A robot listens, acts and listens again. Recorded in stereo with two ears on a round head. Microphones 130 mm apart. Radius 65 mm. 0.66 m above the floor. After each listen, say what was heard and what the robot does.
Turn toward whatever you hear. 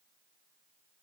Keep listening.
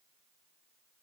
Keep listening.
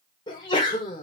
The sneeze: about 30° left or 150° left. Turn 30° left.
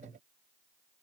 Keep listening.
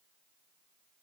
I heard a sneeze, but can't make it out now. It was about straight ahead or 120° left.